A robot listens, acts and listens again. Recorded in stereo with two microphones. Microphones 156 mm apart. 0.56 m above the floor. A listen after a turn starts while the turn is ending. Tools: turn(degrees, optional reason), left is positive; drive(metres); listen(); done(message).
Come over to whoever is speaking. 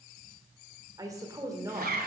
turn(degrees=-20, reason="The woman speaking: about 20° right or 160° right.")
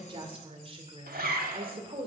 turn(degrees=-135, reason="So it is at 135° right.")
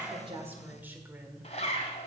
turn(degrees=-15, reason="The woman speaking is now 15° right.")
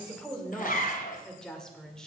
drive(metres=1.0)
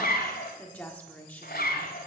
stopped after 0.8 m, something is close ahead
turn(degrees=15, reason="The woman speaking is now 15° left.")
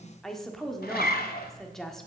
done("Arrived at the woman speaking, straight ahead.")